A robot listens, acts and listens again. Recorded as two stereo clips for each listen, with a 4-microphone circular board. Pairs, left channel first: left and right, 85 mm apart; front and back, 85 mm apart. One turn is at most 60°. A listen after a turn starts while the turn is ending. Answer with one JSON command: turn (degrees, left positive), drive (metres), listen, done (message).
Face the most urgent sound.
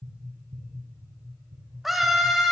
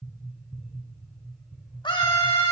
{"done": "Facing the scream, 2 to 4 m away."}